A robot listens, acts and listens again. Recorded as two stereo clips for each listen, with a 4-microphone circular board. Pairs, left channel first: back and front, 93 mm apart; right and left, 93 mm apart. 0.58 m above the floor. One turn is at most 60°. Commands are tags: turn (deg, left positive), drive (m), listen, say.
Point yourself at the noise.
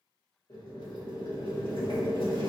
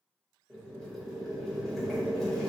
<turn deg="-60"/>
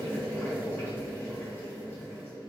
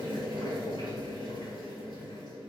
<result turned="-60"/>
<turn deg="-60"/>
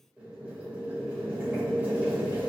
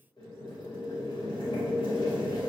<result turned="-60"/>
<turn deg="-60"/>
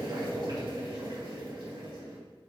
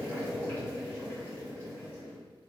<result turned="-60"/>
<turn deg="-30"/>
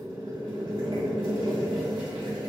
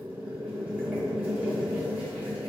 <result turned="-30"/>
<turn deg="15"/>
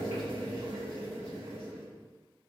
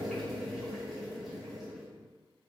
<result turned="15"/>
<say>Facing the boiling, 1 to 2 m away.</say>